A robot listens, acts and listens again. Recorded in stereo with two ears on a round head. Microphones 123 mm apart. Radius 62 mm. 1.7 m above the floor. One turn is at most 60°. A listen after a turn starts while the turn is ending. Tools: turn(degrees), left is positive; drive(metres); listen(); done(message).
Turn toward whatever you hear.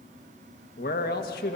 turn(degrees=60)
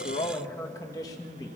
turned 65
turn(degrees=30)
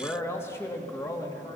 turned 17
turn(degrees=25)
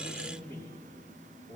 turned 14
turn(degrees=20)
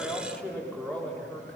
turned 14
turn(degrees=10)
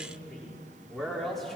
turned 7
done("Found it: a man speaking, straight ahead.")